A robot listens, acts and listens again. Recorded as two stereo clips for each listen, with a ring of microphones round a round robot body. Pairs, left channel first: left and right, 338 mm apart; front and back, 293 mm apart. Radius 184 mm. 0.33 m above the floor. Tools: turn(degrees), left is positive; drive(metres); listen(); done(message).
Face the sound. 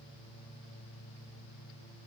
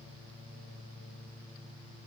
listen()
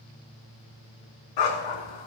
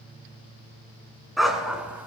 turn(degrees=95)
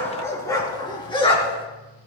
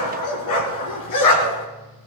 turn(degrees=15)
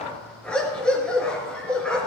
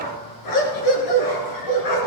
done("Found it: a dog barking, straight ahead, 2 to 4 m away.")